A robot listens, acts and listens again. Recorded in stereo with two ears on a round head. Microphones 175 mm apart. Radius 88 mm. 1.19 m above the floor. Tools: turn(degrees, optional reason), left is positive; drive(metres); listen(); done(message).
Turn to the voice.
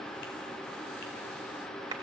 listen()
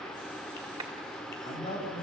turn(degrees=35, reason="The man speaking: about 35° left or 145° left.")
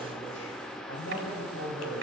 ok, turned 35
turn(degrees=100, reason="So it is at 100° left.")
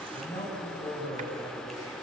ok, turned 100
turn(degrees=20, reason="The man speaking is now 20° left.")
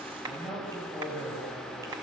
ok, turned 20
done("Facing the man speaking.")